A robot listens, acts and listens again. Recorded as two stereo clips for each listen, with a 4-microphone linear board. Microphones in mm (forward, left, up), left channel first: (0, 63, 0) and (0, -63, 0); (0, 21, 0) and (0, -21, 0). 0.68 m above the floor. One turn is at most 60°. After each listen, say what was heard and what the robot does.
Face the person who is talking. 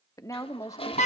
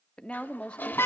The woman speaking: about 25° left or 155° left. Turn 25° left.
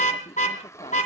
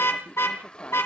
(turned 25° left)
Keep listening.
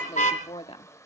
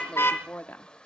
So it is at 120° left. Turn 60° left.
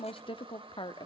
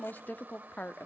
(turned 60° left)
The woman speaking is now 55° left. Turn 55° left.
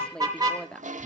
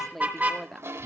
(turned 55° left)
Facing the woman speaking.